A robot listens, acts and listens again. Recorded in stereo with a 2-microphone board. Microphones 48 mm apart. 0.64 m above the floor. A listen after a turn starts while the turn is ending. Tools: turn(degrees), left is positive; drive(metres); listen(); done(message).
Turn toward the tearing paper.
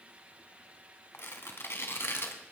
turn(degrees=60)
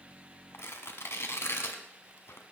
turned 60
turn(degrees=60)
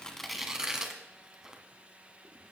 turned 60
turn(degrees=-15)
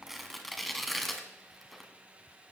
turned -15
done("Facing the tearing paper, 1 to 2 m away.")